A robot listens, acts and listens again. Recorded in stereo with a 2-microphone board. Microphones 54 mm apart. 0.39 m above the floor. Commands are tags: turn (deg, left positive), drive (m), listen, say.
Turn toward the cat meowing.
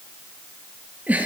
<listen/>
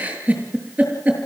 <listen/>
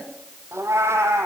<turn deg="-55"/>
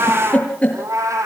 <turn deg="-85"/>
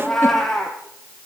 <say>Found it: a cat meowing, straight ahead, 2 to 4 m away.</say>